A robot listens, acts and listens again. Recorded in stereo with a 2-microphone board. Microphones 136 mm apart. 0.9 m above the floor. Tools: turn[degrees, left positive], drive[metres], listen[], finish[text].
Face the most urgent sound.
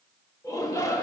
Thought: The shout: about 25° left or 155° left.
Action: turn[25]
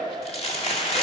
Action: listen[]
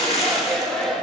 Action: finish[Facing the shout.]